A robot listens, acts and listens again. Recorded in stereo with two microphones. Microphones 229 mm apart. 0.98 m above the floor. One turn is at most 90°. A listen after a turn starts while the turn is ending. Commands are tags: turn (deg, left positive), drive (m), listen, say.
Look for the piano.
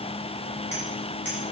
<listen/>
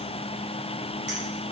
<listen/>
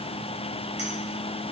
<say>I can't make out a piano to turn to.</say>